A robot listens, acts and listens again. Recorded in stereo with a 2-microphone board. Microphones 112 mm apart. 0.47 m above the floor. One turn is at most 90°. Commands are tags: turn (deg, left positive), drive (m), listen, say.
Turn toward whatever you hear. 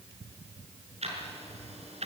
<turn deg="-90"/>
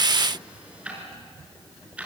<turn deg="-10"/>
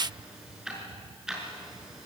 <say>Found it: ticking, straight ahead.</say>